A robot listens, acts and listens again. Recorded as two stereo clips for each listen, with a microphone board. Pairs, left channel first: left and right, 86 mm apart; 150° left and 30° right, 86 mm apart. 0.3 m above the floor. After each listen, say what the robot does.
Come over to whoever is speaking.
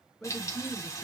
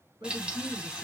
Turn 10° left.
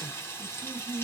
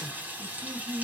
Drive 1.0 m forward.
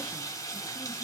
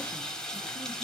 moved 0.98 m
Keep listening.
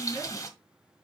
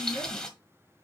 Keep listening.
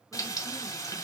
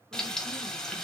Facing where the man speaking came from. I can't hear it now. I did not reach it.